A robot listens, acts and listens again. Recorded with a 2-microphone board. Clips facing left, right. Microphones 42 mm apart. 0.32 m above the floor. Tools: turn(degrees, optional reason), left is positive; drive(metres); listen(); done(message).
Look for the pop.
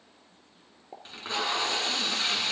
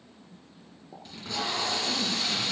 turn(degrees=35, reason="The pop: about 35° left or 145° left.")
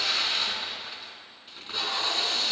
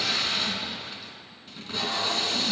listen()
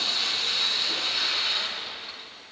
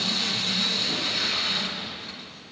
done("I heard a pop, but can't make it out now. It was about straight ahead or 110° left.")